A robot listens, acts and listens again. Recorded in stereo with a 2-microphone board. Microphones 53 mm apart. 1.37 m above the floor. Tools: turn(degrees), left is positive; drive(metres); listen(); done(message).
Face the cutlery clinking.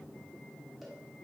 listen()
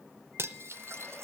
turn(degrees=-60)
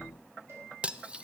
turn(degrees=-30)
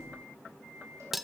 done("Facing the cutlery clinking.")